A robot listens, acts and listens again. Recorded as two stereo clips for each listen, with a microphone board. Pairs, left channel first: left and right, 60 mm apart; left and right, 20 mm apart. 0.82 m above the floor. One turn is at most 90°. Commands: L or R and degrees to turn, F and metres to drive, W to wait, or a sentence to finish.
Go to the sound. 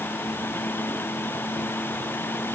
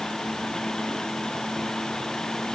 W
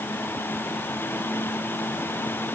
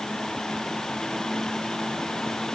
W
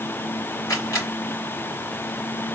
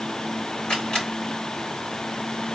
L60
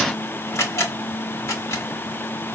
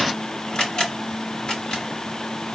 L55
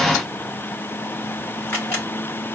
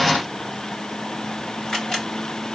L35
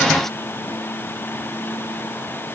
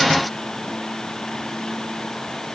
W
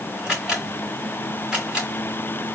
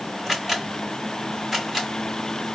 R10
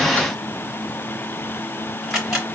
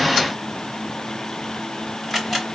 F1.0
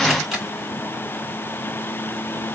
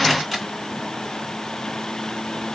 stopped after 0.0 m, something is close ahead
Something is in my way. I am facing the camera shutter but have not reached it.